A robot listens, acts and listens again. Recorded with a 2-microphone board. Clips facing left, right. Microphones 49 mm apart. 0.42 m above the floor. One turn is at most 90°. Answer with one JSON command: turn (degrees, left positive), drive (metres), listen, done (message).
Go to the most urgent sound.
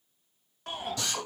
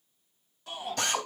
{"turn": 65}
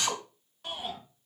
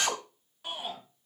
{"drive": 1.0}
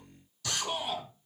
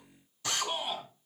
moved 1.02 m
{"drive": 1.0}
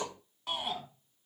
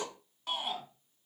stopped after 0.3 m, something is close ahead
{"done": "Something is in my way. I am facing the shout but have not reached it."}